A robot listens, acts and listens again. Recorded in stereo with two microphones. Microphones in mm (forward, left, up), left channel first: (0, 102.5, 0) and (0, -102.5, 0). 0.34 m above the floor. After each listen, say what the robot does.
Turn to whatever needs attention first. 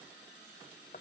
Keep listening.
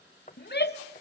Turn 55° left.
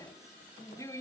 Turn 20° left.
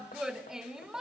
Found it: a shout, straight ahead, 1 to 2 m away.